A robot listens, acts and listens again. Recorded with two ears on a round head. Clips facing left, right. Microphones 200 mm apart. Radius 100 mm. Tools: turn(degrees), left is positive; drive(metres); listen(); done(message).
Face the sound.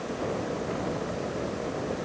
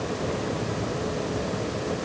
listen()
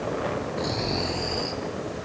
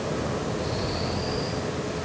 turn(degrees=70)
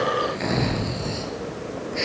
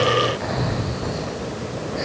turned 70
turn(degrees=40)
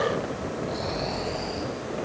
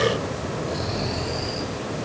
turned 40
turn(degrees=-10)
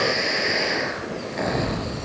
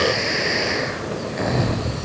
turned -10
done("Facing the snoring.")